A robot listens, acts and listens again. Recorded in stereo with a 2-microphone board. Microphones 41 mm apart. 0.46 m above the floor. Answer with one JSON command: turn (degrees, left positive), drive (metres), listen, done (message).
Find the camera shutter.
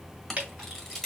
{"turn": 30}
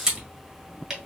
{"turn": -15}
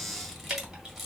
{"listen": true}
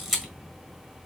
{"done": "Found it: a camera shutter, straight ahead."}